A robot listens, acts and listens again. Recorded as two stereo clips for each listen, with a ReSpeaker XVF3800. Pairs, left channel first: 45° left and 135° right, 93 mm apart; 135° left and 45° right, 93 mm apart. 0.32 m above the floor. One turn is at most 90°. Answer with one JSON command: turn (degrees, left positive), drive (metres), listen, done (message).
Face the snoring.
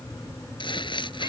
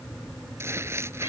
{"listen": true}
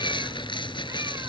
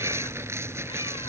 {"listen": true}
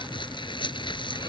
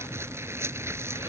{"done": "I can't make out snoring to turn to."}